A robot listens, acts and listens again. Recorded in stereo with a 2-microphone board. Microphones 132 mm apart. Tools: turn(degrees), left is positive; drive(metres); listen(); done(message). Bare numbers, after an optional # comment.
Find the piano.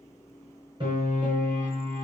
# The piano: about 40° right or 140° right.
turn(-40)
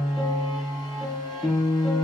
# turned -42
done("Facing the piano, 2 to 4 m away.")